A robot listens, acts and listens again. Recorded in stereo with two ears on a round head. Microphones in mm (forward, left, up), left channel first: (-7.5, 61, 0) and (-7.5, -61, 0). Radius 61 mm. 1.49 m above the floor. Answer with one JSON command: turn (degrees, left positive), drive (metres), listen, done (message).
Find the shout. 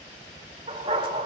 {"listen": true}
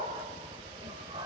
{"listen": true}
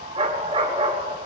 {"done": "I can't make out a shout, only a dog barking."}